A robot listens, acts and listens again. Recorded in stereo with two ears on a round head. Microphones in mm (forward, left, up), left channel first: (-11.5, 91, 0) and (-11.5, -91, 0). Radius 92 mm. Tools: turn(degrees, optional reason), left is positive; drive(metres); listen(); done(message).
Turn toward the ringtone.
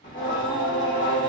listen()
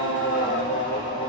listen()
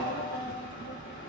done("I can't make out a ringtone to turn to.")